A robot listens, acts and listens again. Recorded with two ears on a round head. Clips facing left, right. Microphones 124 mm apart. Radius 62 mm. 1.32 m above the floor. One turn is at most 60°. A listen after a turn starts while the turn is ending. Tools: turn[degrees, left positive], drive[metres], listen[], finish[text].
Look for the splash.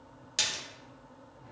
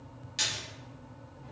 Thought: The splash: about 60° left or 120° left.
Action: turn[60]
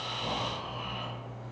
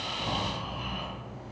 Action: listen[]
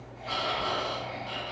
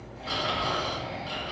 Action: finish[I heard a splash, but can't make it out now. It was about straight ahead or 60° left.]